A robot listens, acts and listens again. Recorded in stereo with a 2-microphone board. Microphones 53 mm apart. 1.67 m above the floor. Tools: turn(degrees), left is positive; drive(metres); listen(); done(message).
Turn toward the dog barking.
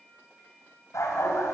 turn(degrees=70)
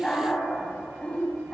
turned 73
turn(degrees=25)
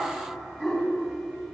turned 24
done("Found it: a dog barking, straight ahead, over 4 m away.")